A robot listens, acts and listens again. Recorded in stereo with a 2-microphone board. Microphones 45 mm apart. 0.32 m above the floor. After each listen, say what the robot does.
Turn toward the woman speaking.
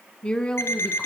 Turn 25° left.
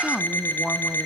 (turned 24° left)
Turn 30° left.
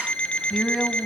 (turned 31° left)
Facing the woman speaking.